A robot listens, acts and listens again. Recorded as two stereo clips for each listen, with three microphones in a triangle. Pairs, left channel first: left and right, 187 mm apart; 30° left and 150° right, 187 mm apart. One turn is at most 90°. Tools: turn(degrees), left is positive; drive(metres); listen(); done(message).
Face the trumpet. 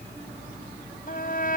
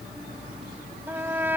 turn(degrees=90)
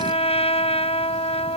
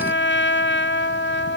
turn(degrees=30)
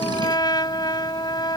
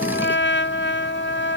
turn(degrees=25)
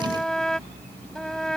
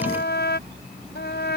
done("Facing the trumpet.")